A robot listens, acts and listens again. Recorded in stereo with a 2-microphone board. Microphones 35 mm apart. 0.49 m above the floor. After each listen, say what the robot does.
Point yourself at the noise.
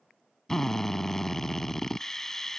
Turn 30° left.
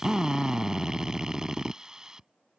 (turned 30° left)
Turn 20° right.
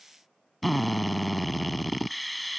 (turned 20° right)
Facing the drill.